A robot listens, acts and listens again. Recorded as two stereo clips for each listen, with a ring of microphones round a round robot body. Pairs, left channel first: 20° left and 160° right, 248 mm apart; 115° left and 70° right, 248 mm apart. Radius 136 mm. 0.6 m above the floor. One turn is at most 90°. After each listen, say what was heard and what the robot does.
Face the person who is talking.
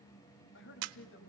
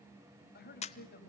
The man speaking: 60° left. Turn 60° left.
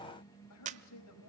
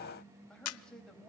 The man speaking is now 25° left. Turn 25° left.
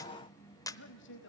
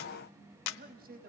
The man speaking is now 15° right. Turn 15° right.
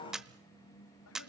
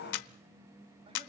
Keep listening.
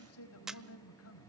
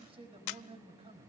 Found it: a man speaking, straight ahead.